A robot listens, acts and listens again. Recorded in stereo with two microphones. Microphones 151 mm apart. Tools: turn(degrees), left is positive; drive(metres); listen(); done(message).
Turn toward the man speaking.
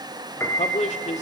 turn(degrees=50)
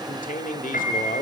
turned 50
turn(degrees=75)
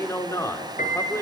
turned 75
turn(degrees=20)
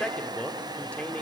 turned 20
turn(degrees=10)
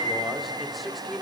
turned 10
done("Facing the man speaking.")